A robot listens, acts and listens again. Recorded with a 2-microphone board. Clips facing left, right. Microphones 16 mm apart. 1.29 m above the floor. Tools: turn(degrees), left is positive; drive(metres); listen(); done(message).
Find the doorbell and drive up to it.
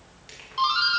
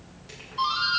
turn(degrees=40)
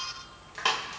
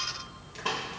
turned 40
turn(degrees=100)
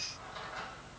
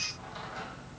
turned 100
listen()
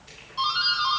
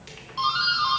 turn(degrees=-10)
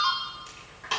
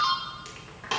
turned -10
drive(metres=1.0)
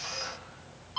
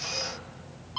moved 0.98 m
drive(metres=1.0)
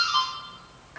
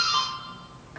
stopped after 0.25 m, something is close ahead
done("I am next to the doorbell.")